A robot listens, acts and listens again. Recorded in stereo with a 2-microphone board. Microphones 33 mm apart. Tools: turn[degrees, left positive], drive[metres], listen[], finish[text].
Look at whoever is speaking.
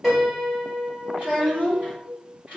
Thought: The child speaking: about 45° right or 135° right.
Action: turn[-45]
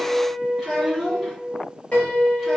Action: finish[Facing the child speaking, 1 to 2 m away.]